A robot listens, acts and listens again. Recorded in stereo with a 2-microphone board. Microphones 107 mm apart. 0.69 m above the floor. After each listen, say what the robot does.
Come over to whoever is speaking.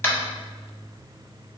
Keep listening.
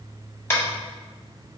Keep listening.
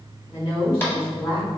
Turn 40° left.
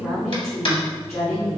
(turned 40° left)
Drive 1.0 m forward.
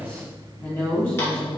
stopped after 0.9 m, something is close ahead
Turn 15° left.
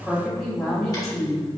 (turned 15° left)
Arrived at the woman speaking, straight ahead.